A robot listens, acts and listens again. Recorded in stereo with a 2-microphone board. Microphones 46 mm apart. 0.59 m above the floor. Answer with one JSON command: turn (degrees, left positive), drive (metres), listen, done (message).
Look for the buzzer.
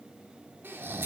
{"listen": true}
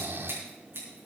{"listen": true}
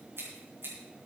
{"done": "I can't make out a buzzer, only snoring and scissors."}